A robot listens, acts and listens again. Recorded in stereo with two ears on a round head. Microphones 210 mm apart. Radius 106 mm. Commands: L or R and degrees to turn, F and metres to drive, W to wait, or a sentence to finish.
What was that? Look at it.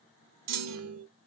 R75
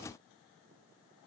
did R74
W
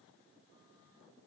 I heard a clunk, but can't make it out now. It was about straight ahead or 30° right.